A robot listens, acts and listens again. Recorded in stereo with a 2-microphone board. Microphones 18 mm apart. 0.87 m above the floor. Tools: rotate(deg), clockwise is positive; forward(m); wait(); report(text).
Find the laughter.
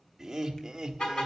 rotate(25)
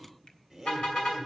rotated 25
report("Facing the laughter.")